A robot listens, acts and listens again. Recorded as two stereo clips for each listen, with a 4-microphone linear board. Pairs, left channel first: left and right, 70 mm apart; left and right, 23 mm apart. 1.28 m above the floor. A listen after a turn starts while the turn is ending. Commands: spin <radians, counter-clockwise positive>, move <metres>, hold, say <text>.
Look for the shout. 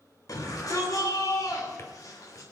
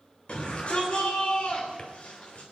spin 0.96
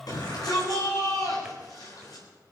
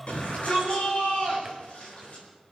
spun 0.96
spin 1.13
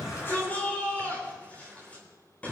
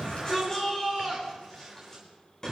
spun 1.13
spin 0.35
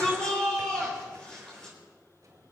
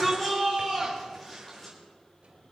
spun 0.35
spin 0.17
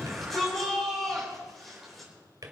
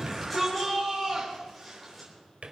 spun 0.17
say Found it: a shout, straight ahead, over 4 m away.